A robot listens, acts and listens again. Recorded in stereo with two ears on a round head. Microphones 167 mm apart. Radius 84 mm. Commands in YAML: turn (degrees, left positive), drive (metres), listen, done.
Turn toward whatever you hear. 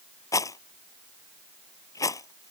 turn: 20
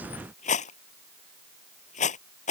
turn: 140
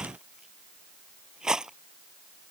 done: "Facing the rattle."